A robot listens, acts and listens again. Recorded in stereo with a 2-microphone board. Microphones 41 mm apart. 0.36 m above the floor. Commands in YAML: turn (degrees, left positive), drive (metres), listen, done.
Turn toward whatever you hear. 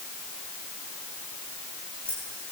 turn: 20
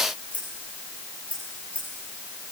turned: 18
turn: 35
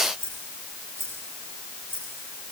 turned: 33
turn: 115
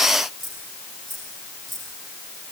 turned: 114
done: "Found it: keys jangling, straight ahead."